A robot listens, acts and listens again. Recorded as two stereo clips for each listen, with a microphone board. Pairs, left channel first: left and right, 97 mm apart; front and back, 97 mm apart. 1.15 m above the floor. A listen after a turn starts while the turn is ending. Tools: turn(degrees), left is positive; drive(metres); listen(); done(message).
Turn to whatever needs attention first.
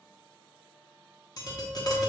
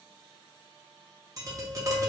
listen()
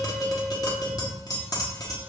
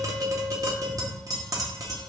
listen()
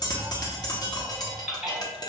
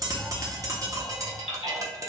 done("Facing the baby crying.")